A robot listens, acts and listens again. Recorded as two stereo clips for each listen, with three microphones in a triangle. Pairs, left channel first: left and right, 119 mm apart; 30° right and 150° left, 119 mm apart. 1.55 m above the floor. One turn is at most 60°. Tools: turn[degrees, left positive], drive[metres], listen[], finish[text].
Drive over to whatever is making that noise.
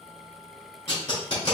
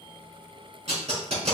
Thought: The tape being pulled: 125° left.
Action: turn[60]
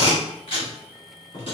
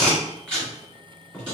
Thought: The tape being pulled is now 50° left.
Action: turn[50]
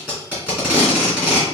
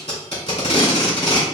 Thought: The tape being pulled is now 10° right.
Action: turn[-10]
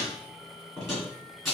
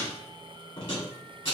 Action: drive[1.0]
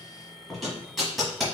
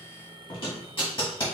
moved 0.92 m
Action: drive[1.0]
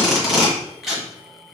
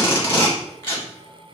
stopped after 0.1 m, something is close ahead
Action: finish[I am next to the tape being pulled.]